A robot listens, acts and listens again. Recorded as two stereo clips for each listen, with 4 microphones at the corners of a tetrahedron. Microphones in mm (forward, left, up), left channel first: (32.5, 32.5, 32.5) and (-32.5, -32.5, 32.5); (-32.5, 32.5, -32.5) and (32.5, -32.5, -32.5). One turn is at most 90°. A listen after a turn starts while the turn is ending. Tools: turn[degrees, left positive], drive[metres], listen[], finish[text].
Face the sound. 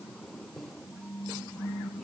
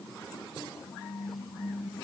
Action: listen[]
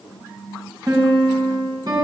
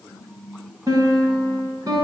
Thought: The piano: 90° right.
Action: turn[-90]
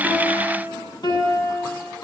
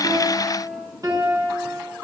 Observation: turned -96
Action: finish[Found it: a piano, straight ahead, over 4 m away.]